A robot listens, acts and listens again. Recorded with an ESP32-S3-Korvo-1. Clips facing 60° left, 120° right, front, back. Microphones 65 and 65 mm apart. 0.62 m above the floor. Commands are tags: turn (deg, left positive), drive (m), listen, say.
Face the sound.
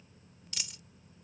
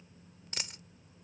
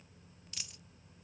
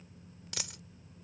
<turn deg="-170"/>
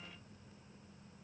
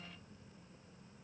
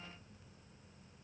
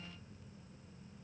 <say>I heard a dropped coin from this way, but can't make it out now.</say>